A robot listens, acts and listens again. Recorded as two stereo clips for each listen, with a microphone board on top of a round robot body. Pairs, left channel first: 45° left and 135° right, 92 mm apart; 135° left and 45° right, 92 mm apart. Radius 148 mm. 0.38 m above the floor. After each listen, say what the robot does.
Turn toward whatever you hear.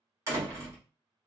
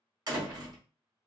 Turn 80° right.
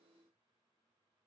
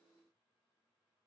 I heard a door slam from this way, but can't make it out now.